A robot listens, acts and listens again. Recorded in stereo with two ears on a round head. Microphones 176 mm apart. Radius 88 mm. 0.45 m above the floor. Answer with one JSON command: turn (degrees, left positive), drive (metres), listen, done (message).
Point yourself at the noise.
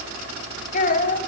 {"turn": 45}
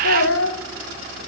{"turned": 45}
{"turn": 90}
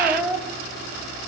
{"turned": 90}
{"turn": -10}
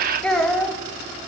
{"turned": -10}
{"done": "Found it: a child speaking, straight ahead."}